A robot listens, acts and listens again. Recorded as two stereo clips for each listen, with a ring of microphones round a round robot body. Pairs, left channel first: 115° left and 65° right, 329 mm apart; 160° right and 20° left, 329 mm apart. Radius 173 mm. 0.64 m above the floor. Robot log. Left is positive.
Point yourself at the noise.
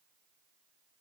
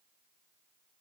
cmd idle
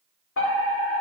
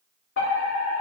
note: The fire alarm: 155° left.
cmd yaw +155
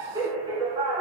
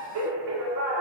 note: The fire alarm is now 10° left.
cmd yaw +10
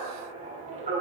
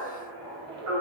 end: Facing the fire alarm, 2 to 4 m away.